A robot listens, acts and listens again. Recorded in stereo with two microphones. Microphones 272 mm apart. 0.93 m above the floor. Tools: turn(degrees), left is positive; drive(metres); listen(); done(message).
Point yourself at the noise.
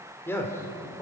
turn(degrees=30)
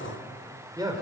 turn(degrees=-15)
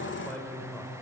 done("Facing the man speaking.")